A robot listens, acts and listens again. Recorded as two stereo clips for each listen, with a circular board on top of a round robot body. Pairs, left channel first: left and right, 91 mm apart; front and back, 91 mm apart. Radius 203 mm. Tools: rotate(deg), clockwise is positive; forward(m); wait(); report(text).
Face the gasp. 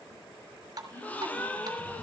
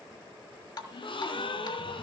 rotate(-15)
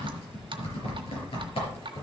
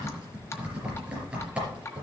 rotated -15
report("I heard a gasp from this way, but can't make it out now.")